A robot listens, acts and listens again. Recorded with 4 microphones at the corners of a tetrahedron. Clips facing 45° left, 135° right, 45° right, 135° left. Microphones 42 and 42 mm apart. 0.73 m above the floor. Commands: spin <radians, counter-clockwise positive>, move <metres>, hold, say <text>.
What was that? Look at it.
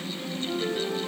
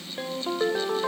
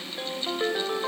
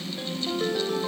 spin -1.92
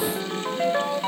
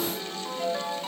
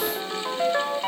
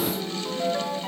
say Found it: a ringtone, straight ahead, 2 to 4 m away.